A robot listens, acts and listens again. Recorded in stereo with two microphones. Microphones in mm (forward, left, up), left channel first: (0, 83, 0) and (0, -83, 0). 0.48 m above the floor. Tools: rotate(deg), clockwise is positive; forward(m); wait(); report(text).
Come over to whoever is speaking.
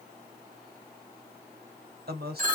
rotate(70)
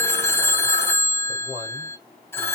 rotate(25)
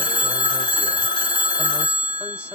wait()
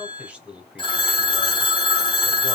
forward(1.0)
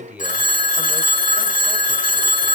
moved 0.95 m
rotate(10)
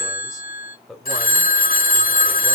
forward(1.0)
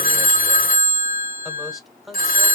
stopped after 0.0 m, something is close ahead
report("Arrived at the man speaking, straight ahead.")